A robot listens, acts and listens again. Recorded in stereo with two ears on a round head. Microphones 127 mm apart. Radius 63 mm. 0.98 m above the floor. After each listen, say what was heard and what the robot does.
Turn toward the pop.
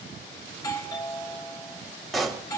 Turn 30° left.
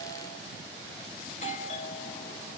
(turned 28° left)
Keep listening.
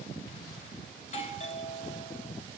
I heard a pop, but can't make it out now. It was about 30° right or 155° left.